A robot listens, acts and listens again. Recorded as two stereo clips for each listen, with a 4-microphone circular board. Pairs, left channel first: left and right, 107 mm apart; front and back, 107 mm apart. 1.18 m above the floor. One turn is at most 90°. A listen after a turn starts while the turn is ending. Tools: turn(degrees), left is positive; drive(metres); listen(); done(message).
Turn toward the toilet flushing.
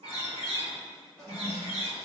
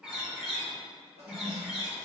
turn(degrees=90)
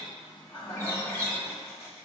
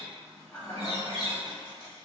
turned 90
turn(degrees=70)
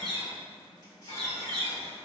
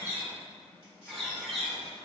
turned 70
listen()
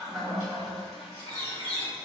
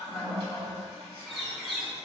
done("Facing the toilet flushing, under 1 m away.")